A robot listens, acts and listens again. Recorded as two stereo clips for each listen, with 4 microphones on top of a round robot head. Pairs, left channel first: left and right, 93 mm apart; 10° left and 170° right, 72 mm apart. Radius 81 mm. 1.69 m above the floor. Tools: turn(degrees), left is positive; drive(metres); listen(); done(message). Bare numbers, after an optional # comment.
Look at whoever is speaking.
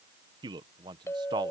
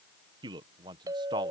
# The man speaking: 140° right.
turn(-140)
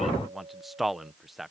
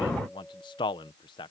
done("Facing the man speaking.")